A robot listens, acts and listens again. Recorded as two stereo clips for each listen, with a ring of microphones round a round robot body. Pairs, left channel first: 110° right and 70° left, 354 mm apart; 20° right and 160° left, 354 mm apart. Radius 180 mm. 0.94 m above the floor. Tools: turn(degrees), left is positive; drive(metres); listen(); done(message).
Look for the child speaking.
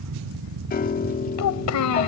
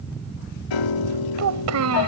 turn(degrees=-155)
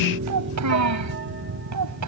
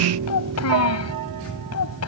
turn(degrees=25)
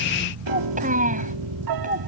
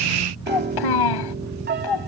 done("Found it: a child speaking, straight ahead.")